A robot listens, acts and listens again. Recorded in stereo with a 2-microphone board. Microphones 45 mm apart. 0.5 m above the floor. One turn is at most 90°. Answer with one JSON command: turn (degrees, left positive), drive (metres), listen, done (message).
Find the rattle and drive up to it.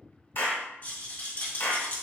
{"turn": 40}
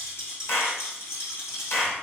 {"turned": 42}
{"turn": 90}
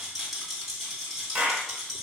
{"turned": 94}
{"drive": 1.0}
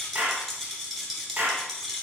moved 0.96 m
{"drive": 1.0}
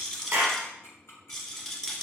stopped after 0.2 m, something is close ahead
{"turn": 10}
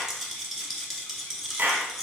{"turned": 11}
{"done": "I am next to the rattle."}